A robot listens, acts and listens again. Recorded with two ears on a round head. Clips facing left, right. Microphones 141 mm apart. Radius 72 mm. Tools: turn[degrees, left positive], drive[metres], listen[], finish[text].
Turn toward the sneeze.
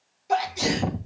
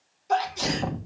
Action: turn[30]
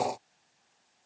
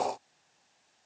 Action: listen[]
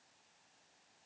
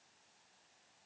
Action: finish[I heard a sneeze, but can't make it out now. It was about 20° right or 140° left.]